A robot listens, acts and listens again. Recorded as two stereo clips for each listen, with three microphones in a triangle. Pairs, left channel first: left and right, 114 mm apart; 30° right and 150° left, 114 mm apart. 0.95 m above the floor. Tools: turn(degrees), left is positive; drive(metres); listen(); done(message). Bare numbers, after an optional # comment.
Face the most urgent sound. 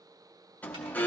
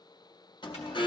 # The alarm: 15° left.
turn(15)
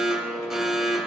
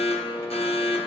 done("Found it: an alarm, straight ahead.")